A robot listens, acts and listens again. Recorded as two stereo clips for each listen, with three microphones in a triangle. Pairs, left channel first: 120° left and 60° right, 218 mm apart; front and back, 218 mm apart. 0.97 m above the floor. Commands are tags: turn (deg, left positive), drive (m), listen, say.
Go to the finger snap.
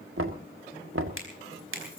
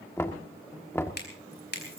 <turn deg="-40"/>
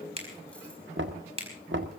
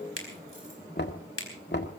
<drive m="1.0"/>
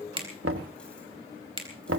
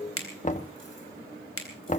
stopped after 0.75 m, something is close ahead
<say>Something is in my way. I am facing the finger snap but have not reached it.</say>